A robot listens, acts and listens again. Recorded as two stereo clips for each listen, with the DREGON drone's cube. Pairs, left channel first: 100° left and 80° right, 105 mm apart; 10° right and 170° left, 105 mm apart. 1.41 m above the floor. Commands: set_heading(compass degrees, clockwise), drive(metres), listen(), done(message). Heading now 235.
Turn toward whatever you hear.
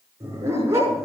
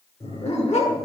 set_heading(250)
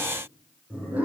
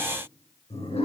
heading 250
done("Facing the dog barking, over 4 m away.")